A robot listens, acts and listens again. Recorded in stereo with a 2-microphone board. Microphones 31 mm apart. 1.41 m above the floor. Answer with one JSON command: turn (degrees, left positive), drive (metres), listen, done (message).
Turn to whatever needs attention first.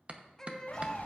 {"turn": 20}
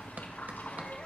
{"listen": true}
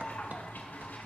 {"listen": true}
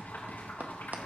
{"done": "I heard a baby crying, but can't make it out now. It was about straight ahead or 140° left."}